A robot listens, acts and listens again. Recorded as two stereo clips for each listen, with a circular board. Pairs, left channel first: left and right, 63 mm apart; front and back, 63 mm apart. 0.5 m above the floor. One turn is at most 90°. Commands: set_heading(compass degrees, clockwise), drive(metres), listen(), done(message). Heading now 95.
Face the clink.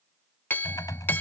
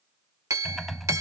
set_heading(5)
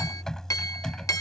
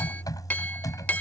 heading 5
set_heading(300)
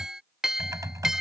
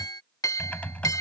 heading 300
set_heading(310)
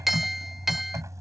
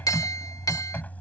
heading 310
done("Found it: a clink, straight ahead.")